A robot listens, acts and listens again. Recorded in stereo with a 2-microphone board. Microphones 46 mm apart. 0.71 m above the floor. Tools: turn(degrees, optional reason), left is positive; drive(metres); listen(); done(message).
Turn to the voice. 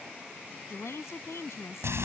turn(degrees=90)
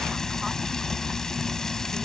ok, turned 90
listen()
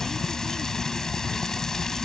listen()
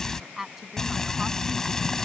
turn(degrees=-10, reason="The woman speaking is now 10° right.")
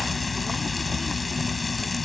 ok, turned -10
listen()
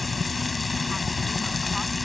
listen()
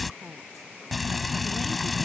done("I heard a woman speaking from this way, but can't make it out now.")